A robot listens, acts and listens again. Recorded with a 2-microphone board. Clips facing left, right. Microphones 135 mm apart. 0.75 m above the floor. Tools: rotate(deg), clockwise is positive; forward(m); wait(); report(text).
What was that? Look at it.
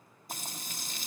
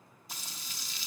rotate(-55)
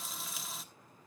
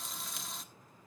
report("Facing the frying.")